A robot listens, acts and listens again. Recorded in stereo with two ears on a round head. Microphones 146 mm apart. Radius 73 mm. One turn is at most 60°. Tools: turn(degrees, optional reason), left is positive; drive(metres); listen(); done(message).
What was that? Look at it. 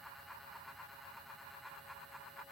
listen()
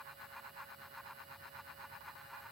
listen()
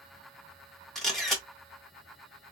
turn(degrees=30)
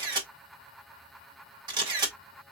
turn(degrees=-30, reason="So it is at 30° right.")
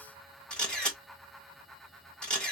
done("Facing the camera shutter.")